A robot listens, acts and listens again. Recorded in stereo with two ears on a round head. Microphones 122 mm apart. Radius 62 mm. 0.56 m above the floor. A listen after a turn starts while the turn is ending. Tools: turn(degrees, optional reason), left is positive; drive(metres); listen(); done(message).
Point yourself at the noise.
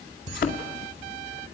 turn(degrees=90)
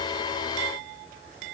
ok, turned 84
done("Facing where the thud came from. I can't hear it now.")